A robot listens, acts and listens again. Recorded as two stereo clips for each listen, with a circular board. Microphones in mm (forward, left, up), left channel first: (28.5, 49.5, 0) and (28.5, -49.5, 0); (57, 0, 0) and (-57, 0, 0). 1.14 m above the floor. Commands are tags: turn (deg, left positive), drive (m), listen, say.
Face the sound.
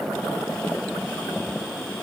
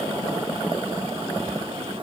<listen/>
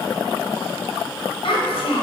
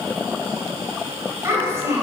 <turn deg="110"/>
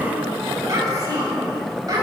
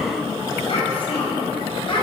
<turn deg="-40"/>
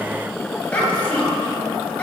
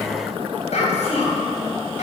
<turn deg="15"/>
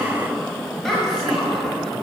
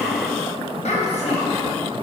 <say>Found it: a child speaking, straight ahead.</say>